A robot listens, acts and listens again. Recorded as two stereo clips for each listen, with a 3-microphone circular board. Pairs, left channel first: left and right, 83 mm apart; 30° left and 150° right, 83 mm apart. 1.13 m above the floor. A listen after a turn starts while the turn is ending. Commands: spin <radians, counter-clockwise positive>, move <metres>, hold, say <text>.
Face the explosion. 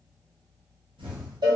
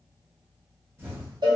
spin -1.48
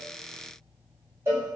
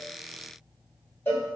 say Facing where the explosion came from. I can't hear it now.